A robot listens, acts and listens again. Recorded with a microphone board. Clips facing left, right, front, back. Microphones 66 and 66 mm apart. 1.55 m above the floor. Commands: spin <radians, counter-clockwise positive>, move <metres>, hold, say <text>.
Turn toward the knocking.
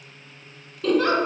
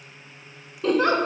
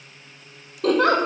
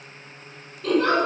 hold
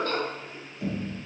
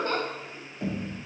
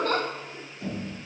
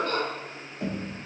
spin -2.36
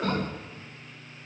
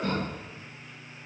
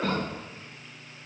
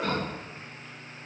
spin -0.35
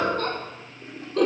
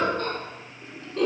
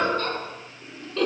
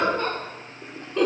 hold
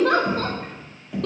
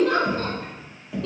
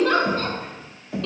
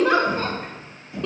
say Found it: knocking, straight ahead, 2 to 4 m away.